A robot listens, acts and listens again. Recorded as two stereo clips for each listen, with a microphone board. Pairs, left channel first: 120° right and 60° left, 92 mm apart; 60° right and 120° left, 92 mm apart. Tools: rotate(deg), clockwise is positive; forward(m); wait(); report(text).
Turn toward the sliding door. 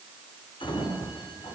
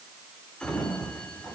rotate(140)
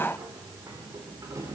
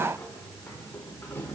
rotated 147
report("Facing the sliding door, 2 to 4 m away.")